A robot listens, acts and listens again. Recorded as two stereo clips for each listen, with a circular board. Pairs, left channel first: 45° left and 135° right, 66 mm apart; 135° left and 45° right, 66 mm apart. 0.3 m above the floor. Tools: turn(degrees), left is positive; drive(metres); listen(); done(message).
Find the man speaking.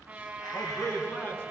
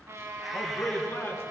turn(degrees=95)
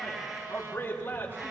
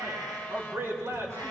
done("Found it: a man speaking, straight ahead, 2 to 4 m away.")